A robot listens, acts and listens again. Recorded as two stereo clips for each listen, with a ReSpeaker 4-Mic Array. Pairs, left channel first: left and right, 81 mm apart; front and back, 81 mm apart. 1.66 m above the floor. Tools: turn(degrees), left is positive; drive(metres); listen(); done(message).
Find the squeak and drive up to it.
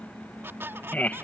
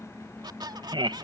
turn(degrees=-150)
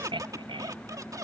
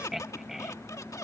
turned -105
turn(degrees=-45)
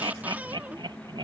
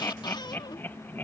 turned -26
turn(degrees=-20)
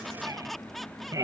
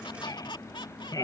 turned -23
drive(metres=1.0)
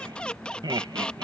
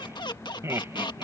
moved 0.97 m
turn(degrees=15)
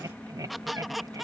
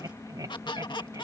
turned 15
drive(metres=1.0)
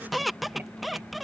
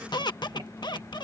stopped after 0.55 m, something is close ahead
done("Arrived at the squeak, straight ahead.")